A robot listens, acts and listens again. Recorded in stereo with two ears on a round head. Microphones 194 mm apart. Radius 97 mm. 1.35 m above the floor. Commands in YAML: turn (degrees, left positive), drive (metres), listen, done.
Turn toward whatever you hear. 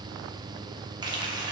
turn: -20
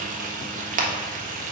turn: -140
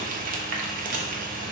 turn: -40
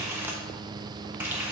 turn: -10
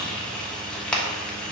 done: "Found it: frying, straight ahead."